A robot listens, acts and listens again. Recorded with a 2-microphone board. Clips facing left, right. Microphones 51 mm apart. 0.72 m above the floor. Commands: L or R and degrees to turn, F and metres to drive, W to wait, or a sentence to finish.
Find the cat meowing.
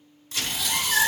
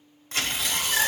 L60
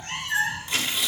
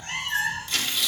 Found it: a cat meowing, straight ahead.